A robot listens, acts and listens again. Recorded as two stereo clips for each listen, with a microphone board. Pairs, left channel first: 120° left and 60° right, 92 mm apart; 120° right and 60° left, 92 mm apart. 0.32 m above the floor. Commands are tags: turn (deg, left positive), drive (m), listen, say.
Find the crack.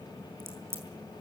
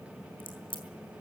<turn deg="-120"/>
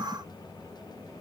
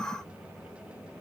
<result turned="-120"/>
<say>Facing where the crack came from. I can't hear it now.</say>